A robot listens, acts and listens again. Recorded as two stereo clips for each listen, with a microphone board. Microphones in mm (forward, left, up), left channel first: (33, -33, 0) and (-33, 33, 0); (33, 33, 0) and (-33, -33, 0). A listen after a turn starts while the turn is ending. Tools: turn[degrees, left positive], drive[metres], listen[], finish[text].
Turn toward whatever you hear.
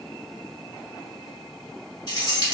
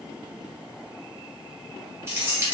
Thought: The keys jangling: 75° right.
Action: turn[-75]
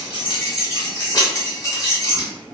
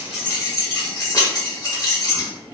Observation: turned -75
Action: finish[Facing the keys jangling.]